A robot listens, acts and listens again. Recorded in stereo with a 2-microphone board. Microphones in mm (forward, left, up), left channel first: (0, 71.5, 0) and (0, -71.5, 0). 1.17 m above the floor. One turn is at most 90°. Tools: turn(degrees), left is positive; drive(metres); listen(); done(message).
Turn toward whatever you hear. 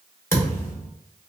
turn(degrees=20)
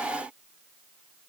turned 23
listen()
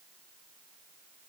done("I heard a thud, but can't make it out now. It was about 5° right or 140° left.")